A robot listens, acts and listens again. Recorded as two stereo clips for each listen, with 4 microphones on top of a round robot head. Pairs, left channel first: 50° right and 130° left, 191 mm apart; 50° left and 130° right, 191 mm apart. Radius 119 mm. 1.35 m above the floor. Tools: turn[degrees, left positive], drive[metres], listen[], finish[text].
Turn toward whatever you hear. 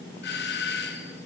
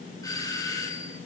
Thought: The doorbell: 20° right.
Action: turn[-20]
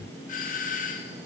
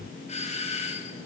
Action: finish[Facing the doorbell, 1 to 2 m away.]